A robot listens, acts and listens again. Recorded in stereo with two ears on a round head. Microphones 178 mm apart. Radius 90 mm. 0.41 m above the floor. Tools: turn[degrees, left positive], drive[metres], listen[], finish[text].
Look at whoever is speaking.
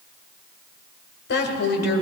Thought: The woman speaking: about 60° left or 120° left.
Action: turn[60]
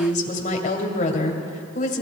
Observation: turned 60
Thought: So it is at 45° left.
Action: turn[45]
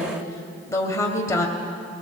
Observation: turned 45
Thought: The woman speaking is now 15° left.
Action: turn[15]
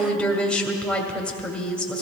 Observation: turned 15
Action: finish[Found it: a woman speaking, straight ahead, 1 to 2 m away.]